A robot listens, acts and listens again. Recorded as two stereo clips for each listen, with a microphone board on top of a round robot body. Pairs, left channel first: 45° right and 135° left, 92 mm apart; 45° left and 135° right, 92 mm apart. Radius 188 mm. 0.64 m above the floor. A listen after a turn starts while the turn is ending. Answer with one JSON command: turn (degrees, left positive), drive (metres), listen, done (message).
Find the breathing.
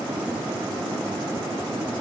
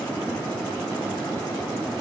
{"listen": true}
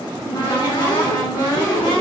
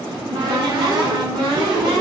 {"listen": true}
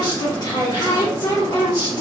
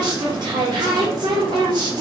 {"done": "I can't make out breathing, only a cupboard door."}